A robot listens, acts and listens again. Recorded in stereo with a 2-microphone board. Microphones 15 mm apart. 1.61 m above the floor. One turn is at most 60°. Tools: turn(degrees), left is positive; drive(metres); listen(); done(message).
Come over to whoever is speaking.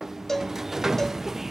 listen()
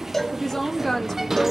turn(degrees=20)
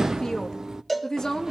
turn(degrees=60)
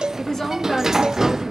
turn(degrees=45)
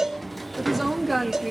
drive(metres=1.0)
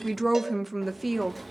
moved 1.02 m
drive(metres=1.0)
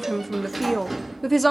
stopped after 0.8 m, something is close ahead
turn(degrees=10)
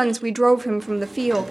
done("I am next to the woman speaking.")